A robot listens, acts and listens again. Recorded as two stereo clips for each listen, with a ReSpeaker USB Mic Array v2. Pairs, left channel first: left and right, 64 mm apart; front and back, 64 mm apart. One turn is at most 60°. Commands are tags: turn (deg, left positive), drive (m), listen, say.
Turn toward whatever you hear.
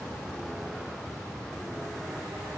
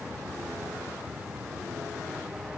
<listen/>
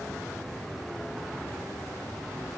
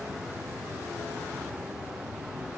<listen/>
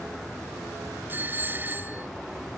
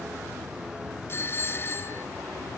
<turn deg="-40"/>
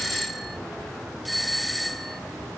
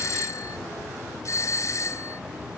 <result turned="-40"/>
<say>Found it: a doorbell, straight ahead.</say>